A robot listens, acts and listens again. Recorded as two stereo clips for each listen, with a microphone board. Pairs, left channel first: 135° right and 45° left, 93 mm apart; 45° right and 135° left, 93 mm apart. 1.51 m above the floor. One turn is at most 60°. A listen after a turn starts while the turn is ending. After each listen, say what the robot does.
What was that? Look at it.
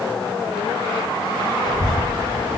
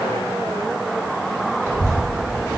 Turn 60° left.
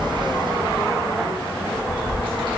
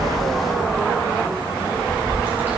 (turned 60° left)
Turn 60° left.
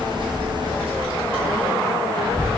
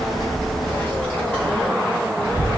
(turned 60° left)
Turn 40° left.
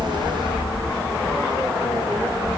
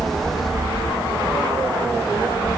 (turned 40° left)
Found it: a child speaking, straight ahead, 1 to 2 m away.